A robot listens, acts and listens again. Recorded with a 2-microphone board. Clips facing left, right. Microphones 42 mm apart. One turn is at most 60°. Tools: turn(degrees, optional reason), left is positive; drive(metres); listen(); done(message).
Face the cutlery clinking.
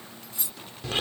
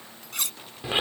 turn(degrees=-60, reason="The cutlery clinking: about 75° right or 105° right.")
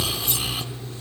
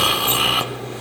listen()
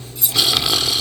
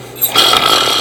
listen()
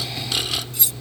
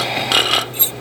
done("I heard cutlery clinking, but can't make it out now. It was about 15° right or 45° right.")